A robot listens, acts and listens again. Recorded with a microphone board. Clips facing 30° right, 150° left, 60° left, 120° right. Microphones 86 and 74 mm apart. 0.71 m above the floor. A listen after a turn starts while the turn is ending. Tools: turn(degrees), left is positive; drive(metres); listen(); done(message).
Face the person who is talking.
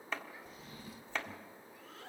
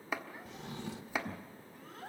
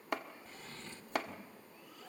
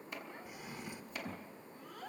turn(degrees=-160)
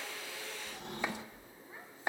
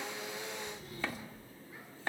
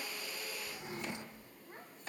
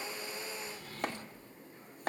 listen()
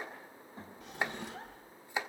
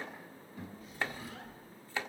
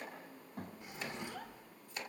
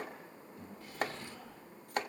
turn(degrees=25)
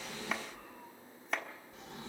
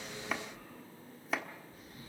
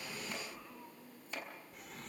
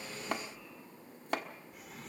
listen()
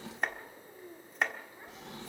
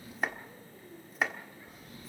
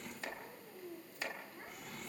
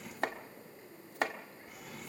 done("Found it: a child speaking, straight ahead, over 4 m away.")